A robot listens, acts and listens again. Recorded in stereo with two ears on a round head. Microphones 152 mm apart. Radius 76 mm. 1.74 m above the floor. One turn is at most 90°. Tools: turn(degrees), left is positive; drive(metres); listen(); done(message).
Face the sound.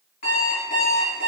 turn(degrees=50)
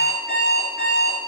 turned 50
turn(degrees=70)
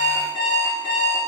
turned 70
turn(degrees=25)
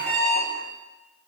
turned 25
done("Facing the alarm clock.")